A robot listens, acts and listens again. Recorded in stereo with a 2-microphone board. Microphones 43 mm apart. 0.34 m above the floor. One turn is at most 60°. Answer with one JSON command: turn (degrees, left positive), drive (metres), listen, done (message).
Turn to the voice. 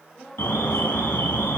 {"turn": 20}
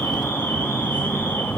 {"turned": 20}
{"listen": true}
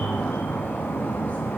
{"listen": true}
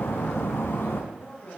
{"turn": 60}
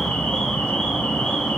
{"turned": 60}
{"turn": 60}
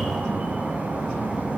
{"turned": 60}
{"turn": 20}
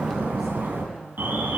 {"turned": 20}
{"done": "Facing where the woman speaking came from. I can't hear it now."}